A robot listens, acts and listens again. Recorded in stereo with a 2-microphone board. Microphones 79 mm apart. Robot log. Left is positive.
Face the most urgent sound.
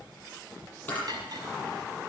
cmd idle
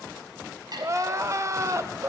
note: The crying: about 40° right or 140° right.
cmd yaw -40
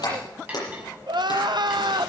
note: So it is at 95° right.
cmd yaw -95
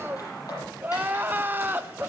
note: The crying is now 25° right.
cmd yaw -25
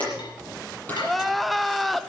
end: Found it: crying, straight ahead, under 1 m away.